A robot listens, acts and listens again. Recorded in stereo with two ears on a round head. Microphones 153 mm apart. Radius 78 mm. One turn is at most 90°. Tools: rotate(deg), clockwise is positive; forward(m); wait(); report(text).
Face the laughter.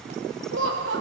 rotate(90)
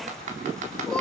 wait()
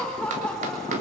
rotate(-10)
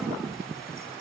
wait()
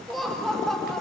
report("Found it: laughter, straight ahead.")